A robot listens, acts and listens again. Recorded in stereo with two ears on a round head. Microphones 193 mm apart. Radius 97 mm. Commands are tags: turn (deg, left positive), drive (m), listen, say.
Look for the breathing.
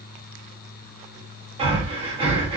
<turn deg="-25"/>
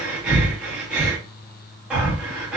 <say>Facing the breathing.</say>